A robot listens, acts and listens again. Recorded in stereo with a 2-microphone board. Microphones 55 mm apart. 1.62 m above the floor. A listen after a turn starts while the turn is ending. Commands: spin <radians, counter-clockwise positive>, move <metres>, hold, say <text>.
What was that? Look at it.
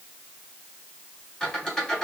spin 0.52
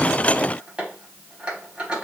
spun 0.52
spin -0.35
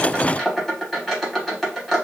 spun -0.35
say Facing the squeak.